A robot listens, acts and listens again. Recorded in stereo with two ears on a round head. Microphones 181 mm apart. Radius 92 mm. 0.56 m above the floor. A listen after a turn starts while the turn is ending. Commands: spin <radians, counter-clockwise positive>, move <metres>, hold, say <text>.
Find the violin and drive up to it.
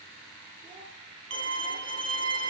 spin -1.13
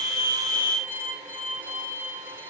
spin -0.26
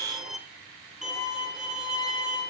move 1.0
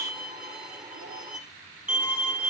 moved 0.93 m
move 1.0
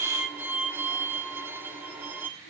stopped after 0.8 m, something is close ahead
spin -0.35
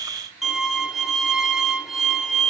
say Arrived at the violin, straight ahead.